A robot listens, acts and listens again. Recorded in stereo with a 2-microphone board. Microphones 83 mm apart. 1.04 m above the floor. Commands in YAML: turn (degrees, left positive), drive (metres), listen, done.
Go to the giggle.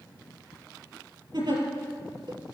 turn: -65
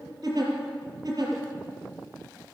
turn: -50
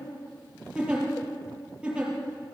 turn: -15
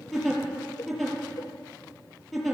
drive: 1.0
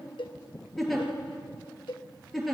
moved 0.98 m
drive: 1.0
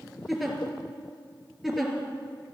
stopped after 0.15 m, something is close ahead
done: "Something is in my way. I am facing the giggle but have not reached it."